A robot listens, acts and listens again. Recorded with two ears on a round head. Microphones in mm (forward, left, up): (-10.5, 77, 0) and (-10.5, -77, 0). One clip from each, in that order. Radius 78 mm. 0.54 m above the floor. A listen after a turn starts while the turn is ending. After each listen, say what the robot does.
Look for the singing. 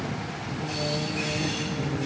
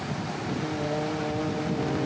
Turn 35° right.
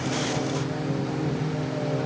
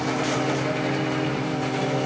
Turn 105° right.
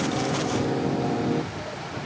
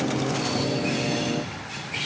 Turn 25° left.
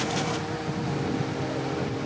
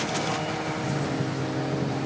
Found it: singing, straight ahead.